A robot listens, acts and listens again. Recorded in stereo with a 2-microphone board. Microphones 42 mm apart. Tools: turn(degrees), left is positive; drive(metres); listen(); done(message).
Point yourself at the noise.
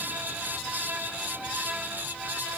listen()
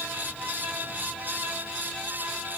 listen()
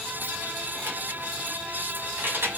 turn(degrees=-65)
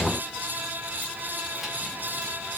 listen()
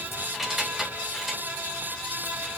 done("Facing the keys jangling.")